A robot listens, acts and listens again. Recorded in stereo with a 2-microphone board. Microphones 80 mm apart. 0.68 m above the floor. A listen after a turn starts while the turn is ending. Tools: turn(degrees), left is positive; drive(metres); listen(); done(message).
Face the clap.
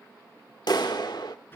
turn(degrees=60)
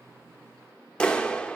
turn(degrees=15)
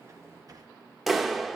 done("Facing the clap, 1 to 2 m away.")